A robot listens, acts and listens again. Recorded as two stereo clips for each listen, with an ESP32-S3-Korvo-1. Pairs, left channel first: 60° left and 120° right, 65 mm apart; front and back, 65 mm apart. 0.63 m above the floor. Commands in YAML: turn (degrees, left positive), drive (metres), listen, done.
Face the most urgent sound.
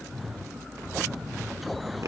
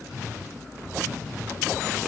listen: true
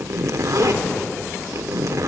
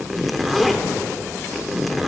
listen: true
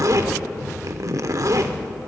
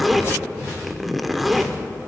done: "I can't make out anything urgent to turn to."